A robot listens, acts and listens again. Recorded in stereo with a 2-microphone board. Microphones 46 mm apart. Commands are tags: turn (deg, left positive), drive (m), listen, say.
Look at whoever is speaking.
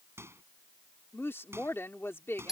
<turn deg="70"/>
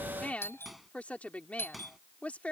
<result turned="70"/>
<turn deg="30"/>
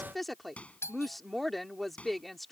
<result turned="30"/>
<say>Found it: a woman speaking, straight ahead.</say>